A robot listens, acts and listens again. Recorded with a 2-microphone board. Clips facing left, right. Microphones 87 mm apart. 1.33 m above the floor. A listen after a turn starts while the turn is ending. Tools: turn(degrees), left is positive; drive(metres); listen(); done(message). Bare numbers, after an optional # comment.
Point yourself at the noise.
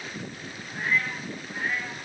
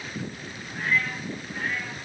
turn(30)
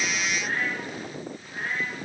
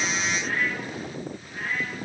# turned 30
# So it is at 160° left.
turn(160)
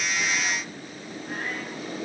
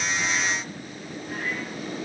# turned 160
listen()
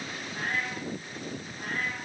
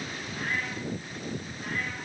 # The cat meowing is now 50° left.
turn(50)
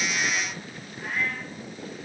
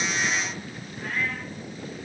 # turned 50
done("Facing the cat meowing, over 4 m away.")